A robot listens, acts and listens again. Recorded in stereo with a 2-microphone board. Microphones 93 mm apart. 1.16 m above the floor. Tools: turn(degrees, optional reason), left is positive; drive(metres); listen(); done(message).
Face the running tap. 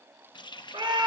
turn(degrees=55, reason="The running tap: about 55° left or 125° left.")
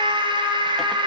listen()
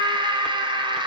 listen()
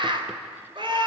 done("I heard a running tap, but can't make it out now. It was about straight ahead or 70° left.")